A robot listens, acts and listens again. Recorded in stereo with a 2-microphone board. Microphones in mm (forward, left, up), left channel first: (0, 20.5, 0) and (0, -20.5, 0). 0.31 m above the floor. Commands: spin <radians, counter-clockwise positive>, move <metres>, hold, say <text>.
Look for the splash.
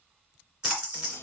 spin -0.26
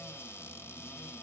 hold
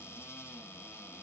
say I heard a splash, but can't make it out now. It was about straight ahead or 150° right.